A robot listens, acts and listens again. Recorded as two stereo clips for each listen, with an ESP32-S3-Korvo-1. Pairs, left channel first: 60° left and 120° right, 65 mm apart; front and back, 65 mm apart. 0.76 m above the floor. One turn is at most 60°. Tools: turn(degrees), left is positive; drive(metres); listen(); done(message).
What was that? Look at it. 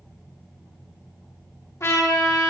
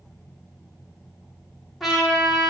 turn(degrees=60)
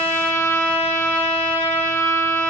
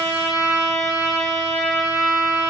turn(degrees=15)
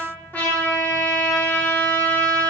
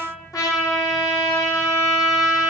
done("Found it: a trumpet, straight ahead.")